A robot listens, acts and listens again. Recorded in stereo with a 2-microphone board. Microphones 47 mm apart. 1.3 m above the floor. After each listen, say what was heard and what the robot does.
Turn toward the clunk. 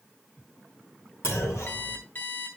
Turn 90° left.
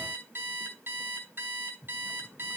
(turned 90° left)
Facing where the clunk came from. I can't hear it now.